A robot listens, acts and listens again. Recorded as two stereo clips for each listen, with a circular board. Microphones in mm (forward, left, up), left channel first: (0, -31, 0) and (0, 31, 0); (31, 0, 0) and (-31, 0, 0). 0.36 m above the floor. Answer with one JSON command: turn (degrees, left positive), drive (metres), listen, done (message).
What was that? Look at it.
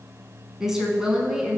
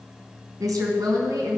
{"turn": 170}
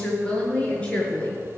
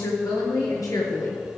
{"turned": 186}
{"turn": -20}
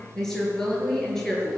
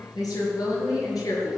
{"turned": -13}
{"turn": -10}
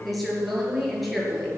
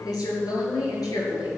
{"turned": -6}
{"done": "Found it: a woman speaking, straight ahead."}